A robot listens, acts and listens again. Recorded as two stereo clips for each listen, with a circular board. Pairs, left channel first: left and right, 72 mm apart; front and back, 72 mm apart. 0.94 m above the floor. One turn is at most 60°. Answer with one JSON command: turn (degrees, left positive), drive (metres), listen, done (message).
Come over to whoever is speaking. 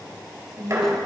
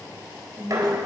{"turn": -60}
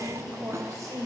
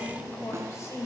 {"turn": -50}
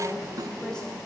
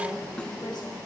{"listen": true}
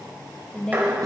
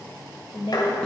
{"turn": 10}
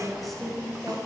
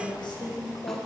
{"drive": 1.0}
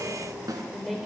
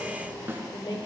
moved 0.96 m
{"drive": 1.0}
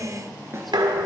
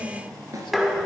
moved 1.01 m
{"drive": 1.0}
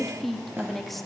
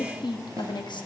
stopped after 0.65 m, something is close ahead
{"done": "I am next to the woman speaking."}